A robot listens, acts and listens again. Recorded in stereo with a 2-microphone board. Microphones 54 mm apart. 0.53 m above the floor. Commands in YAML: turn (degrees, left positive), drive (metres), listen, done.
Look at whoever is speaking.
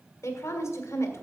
turn: 65
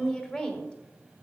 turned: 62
turn: 15
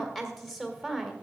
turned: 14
done: "Found it: a woman speaking, straight ahead."